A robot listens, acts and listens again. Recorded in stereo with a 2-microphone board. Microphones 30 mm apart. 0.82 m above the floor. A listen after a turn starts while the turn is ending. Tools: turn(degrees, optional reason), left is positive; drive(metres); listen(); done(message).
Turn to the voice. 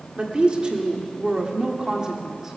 turn(degrees=-20, reason="The woman speaking: about 20° right or 160° right.")
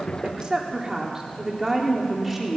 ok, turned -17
turn(degrees=-30)
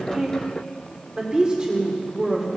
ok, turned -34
turn(degrees=-25, reason="The woman speaking: about 25° right or 155° right.")
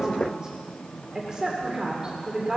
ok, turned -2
turn(degrees=-25, reason="The woman speaking: about 25° right or 155° right.")
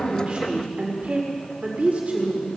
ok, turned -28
turn(degrees=-125, reason="So it is at 125° right.")
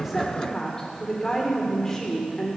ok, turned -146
turn(degrees=20, reason="The woman speaking is now 20° left.")
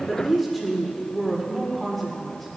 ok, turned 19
done("Found it: a woman speaking, straight ahead.")